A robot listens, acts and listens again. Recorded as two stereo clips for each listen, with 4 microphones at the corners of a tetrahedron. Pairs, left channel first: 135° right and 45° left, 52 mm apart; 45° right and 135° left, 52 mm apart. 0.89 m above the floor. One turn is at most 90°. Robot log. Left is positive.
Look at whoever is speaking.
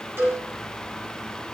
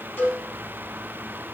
cmd idle
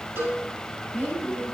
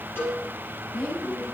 note: The woman speaking: 55° left.
cmd yaw +55
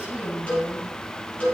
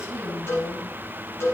note: The woman speaking is now 30° right.
cmd yaw -30
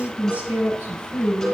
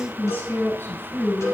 note: The woman speaking is now 15° right.
cmd yaw -15
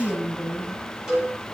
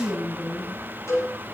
end: Facing the woman speaking, over 4 m away.